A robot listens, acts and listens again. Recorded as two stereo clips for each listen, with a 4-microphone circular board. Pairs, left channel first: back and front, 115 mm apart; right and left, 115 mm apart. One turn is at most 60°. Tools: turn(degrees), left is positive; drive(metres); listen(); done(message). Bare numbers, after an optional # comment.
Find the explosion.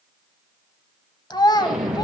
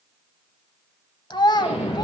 # The explosion: 90° right.
turn(-60)
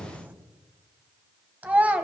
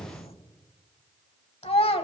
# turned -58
# Nothing new. It was at 30° right.
turn(-30)
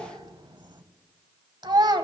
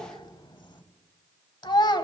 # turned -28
done("I heard an explosion from this way, but can't make it out now.")